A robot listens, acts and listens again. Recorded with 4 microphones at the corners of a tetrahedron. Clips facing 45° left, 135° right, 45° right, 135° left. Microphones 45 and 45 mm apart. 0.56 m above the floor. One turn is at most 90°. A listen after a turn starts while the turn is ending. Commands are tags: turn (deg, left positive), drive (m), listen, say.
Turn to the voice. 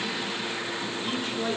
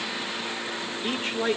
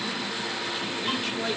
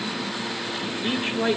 <turn deg="-90"/>
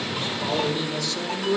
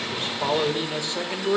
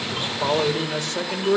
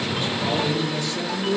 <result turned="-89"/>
<turn deg="-75"/>
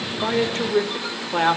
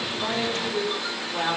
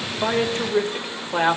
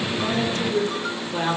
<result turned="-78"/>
<say>Facing the man speaking, 1 to 2 m away.</say>